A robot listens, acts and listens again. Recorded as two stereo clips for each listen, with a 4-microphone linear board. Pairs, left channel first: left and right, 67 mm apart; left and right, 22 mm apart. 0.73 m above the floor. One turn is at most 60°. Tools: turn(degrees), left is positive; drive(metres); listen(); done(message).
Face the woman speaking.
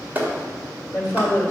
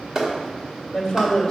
turn(degrees=35)
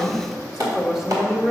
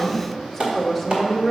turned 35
turn(degrees=-10)
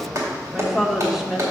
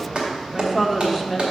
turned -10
turn(degrees=-10)
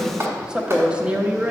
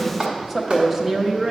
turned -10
turn(degrees=-25)
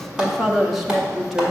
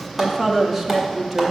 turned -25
done("Facing the woman speaking, 1 to 2 m away.")